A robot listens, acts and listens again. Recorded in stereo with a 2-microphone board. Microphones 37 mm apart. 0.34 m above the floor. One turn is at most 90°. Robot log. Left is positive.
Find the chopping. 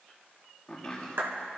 note: The chopping: about 25° left or 155° left.
cmd yaw +25
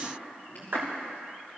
note: So it is at 130° left.
cmd yaw +90
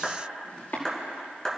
note: The chopping is now 60° left.
cmd yaw +60
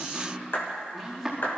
end: Facing the chopping.